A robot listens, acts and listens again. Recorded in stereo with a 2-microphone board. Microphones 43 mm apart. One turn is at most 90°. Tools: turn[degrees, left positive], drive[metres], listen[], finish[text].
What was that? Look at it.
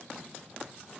Action: listen[]
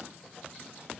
Action: listen[]
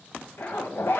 Thought: The zipper: about 60° left or 120° left.
Action: turn[60]
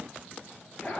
Thought: So it is at 35° left.
Action: turn[35]
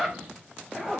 Action: finish[Facing the zipper, under 1 m away.]